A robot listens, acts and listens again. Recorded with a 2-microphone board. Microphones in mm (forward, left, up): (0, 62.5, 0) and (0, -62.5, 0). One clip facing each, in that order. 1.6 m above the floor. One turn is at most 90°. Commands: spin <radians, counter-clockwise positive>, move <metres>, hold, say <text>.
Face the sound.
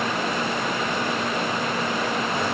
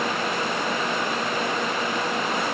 hold
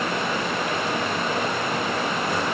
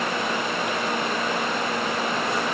hold
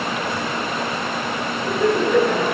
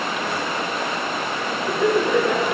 spin 0.52
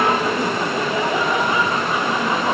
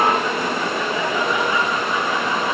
spin 1.57
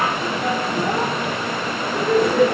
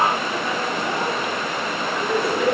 spin 1.31
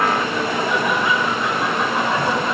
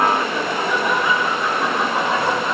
spin -0.17
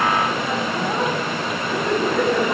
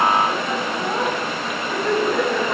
say Found it: laughter, straight ahead.